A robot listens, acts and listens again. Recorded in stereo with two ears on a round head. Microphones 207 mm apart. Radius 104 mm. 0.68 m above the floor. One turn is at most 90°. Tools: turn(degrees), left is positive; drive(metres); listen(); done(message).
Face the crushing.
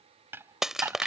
turn(degrees=-30)
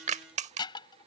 turn(degrees=-90)
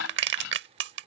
turn(degrees=-55)
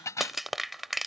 done("Facing the crushing.")